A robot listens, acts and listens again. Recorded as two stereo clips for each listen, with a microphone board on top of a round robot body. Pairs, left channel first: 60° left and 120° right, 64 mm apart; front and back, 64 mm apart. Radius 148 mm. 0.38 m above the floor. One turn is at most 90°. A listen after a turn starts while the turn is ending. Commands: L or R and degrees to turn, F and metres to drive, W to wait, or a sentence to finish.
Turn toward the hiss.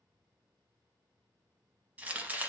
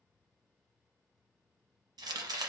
W
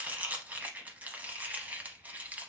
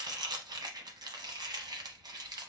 W
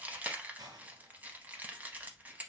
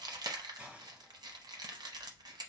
R90
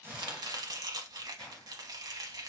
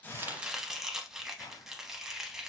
R20
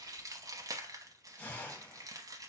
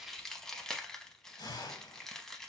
Facing the hiss, 1 to 2 m away.